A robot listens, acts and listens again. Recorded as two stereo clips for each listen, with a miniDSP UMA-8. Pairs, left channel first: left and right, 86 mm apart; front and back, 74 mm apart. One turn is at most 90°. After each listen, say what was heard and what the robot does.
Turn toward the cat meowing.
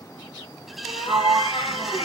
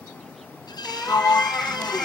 The cat meowing: 85° left. Turn 85° left.
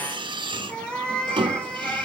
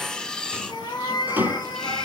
The cat meowing is now 10° left. Turn 10° left.
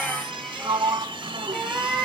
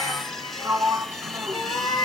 Facing the cat meowing, 2 to 4 m away.